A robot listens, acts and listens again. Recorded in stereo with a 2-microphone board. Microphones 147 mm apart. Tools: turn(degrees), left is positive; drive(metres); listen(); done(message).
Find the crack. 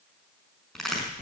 turn(degrees=30)
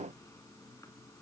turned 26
listen()
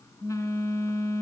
done("I heard a crack, but can't make it out now. It was about 25° right or 150° left.")